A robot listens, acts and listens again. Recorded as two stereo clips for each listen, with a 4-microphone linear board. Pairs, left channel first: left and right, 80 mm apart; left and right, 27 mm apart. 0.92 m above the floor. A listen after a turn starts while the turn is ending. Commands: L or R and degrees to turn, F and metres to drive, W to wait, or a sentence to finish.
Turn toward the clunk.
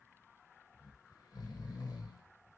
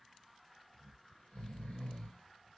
W
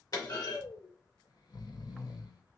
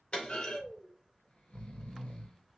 L55
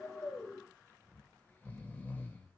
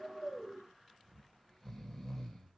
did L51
W
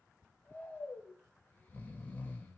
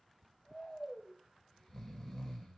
I heard a clunk, but can't make it out now. It was about straight ahead or 75° left.